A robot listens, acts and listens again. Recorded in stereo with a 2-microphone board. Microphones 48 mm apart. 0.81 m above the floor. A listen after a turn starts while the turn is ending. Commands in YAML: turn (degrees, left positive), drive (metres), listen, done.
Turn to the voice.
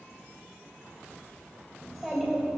turn: 30
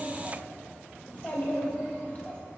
turn: 145
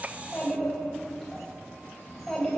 done: "Found it: a child speaking, straight ahead."